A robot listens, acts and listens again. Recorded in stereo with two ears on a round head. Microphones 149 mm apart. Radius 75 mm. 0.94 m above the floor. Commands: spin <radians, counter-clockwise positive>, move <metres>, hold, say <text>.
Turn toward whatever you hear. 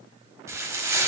spin -0.26
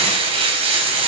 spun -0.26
spin -2.53
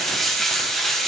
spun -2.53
say Found it: frying, straight ahead, 1 to 2 m away.